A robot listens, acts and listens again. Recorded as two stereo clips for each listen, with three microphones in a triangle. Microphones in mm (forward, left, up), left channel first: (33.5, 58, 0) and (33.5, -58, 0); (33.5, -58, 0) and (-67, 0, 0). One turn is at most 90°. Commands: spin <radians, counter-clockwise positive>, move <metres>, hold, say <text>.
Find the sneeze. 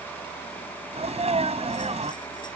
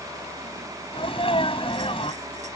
spin -1.13
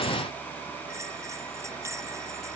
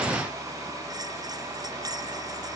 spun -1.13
say Facing where the sneeze came from. I can't hear it now.